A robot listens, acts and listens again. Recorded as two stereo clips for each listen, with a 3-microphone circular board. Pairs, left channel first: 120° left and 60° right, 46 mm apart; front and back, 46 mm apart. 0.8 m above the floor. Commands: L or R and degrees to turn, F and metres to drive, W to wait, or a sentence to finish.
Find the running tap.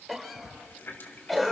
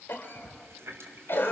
L155
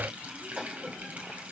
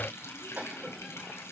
Facing the running tap, 2 to 4 m away.